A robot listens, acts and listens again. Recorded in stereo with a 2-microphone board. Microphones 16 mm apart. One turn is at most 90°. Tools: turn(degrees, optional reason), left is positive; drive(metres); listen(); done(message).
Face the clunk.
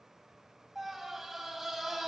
listen()
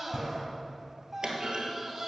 turn(degrees=-60, reason="The clunk: about 60° right or 120° right.")
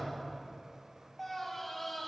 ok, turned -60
listen()
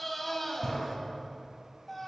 done("I heard a clunk, but can't make it out now. It was about straight ahead or 60° right.")